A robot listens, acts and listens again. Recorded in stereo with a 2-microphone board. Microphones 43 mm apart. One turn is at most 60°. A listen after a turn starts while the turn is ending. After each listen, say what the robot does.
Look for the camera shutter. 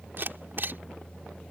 Turn 55° right.
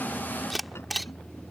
Found it: a camera shutter, straight ahead.